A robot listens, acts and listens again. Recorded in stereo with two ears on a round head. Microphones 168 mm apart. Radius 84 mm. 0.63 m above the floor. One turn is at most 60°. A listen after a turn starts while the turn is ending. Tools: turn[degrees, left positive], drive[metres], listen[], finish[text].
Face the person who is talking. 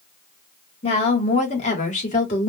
Thought: The woman speaking: about 40° left or 140° left.
Action: turn[40]
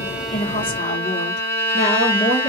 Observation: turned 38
Thought: The woman speaking: about 35° left or 145° left.
Action: turn[35]
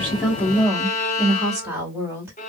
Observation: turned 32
Thought: So it is at 10° right.
Action: turn[-10]
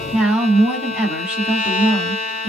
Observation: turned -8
Action: finish[Facing the woman speaking.]